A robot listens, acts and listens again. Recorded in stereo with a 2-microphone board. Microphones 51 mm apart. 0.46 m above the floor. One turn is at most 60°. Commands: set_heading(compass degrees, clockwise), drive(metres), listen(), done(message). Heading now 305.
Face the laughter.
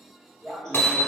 set_heading(275)
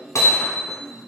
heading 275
set_heading(215)
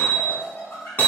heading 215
set_heading(175)
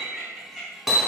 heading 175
done("Facing the laughter, 2 to 4 m away.")